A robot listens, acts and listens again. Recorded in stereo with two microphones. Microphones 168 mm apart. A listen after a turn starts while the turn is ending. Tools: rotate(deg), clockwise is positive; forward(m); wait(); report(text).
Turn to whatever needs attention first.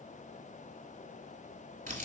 wait()
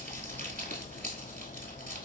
wait()
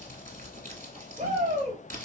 rotate(55)
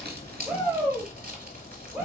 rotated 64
rotate(10)
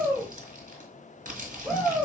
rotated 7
report("Facing the shout, 2 to 4 m away.")